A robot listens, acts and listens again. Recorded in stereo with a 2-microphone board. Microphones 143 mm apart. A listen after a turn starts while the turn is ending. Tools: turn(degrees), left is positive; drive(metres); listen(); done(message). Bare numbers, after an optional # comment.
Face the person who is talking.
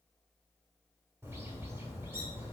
listen()
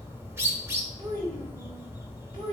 # The child speaking: about 40° right or 140° right.
turn(-40)
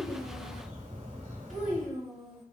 done("Found it: a child speaking, straight ahead, over 4 m away.")